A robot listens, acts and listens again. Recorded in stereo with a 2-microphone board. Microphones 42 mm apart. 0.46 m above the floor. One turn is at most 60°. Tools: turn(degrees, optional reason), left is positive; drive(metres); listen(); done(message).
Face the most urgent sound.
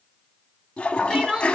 turn(degrees=-30)
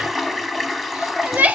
turn(degrees=-60, reason="So it is at 140° right.")
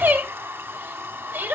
turn(degrees=-60, reason="The crying is now 70° right.")
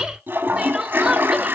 turn(degrees=-20, reason="The crying is now 20° right.")
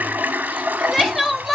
done("Found it: crying, straight ahead, 1 to 2 m away.")